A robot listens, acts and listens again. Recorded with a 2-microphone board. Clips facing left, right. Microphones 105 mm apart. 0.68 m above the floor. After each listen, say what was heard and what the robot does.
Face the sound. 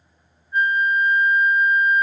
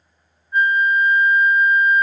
The flute: about 55° right or 125° right. Turn 55° right.
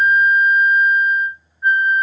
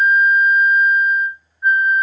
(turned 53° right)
Facing the flute.